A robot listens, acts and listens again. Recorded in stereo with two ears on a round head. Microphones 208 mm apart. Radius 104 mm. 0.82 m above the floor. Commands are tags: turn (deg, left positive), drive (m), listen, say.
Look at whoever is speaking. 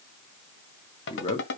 <turn deg="25"/>
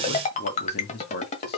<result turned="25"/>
<turn deg="125"/>
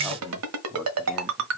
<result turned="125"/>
<say>Found it: a man speaking, straight ahead.</say>